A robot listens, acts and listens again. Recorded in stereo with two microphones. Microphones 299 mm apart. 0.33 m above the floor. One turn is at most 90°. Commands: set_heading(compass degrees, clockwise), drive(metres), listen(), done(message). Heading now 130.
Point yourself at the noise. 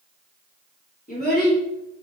set_heading(100)
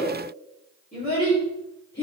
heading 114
set_heading(79)
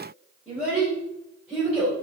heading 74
done("Facing the child speaking, over 4 m away.")